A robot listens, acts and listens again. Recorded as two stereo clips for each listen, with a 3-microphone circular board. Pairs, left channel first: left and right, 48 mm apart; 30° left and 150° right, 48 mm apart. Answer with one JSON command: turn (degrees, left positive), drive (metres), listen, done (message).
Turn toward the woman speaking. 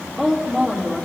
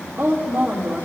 {"turn": 175}
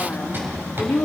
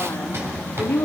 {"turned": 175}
{"turn": 40}
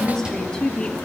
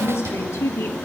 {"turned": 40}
{"turn": 15}
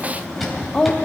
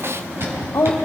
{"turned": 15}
{"turn": 15}
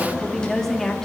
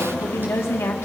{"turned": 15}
{"turn": 10}
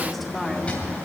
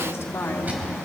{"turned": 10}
{"done": "Found it: a woman speaking, straight ahead."}